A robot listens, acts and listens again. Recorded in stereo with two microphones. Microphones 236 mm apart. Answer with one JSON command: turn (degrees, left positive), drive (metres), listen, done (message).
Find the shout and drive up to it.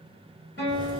{"listen": true}
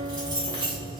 {"listen": true}
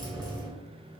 {"done": "I can't make out a shout, only a guitar and keys jangling."}